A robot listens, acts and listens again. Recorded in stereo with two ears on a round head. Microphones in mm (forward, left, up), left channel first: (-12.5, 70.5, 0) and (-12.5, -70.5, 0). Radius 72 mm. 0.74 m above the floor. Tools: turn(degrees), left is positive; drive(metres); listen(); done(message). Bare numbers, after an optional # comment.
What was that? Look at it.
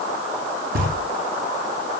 # The knocking: about 65° right or 115° right.
turn(-65)
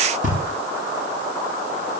# So it is at 50° right.
turn(-50)
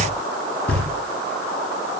# The knocking is now 10° left.
turn(10)
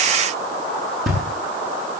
done("Found it: knocking, straight ahead.")